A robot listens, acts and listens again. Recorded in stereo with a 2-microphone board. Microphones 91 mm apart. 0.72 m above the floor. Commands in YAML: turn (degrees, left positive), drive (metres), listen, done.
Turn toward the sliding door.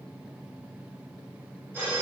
listen: true
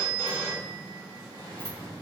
turn: -40
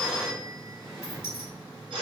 done: "Found it: a sliding door, straight ahead, 1 to 2 m away."